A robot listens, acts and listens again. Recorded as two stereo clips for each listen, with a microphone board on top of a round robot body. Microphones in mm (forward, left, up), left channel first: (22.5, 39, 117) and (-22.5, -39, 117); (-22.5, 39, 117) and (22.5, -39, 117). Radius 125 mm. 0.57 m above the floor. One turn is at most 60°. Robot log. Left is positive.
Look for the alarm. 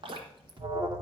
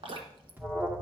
note: The alarm: 125° right.
cmd yaw -60
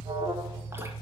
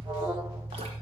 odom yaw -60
note: The alarm is now 90° right.
cmd yaw -60
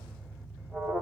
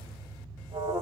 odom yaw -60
note: The alarm is now 30° right.
cmd yaw -30
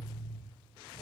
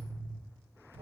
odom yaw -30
end: Facing the alarm, 2 to 4 m away.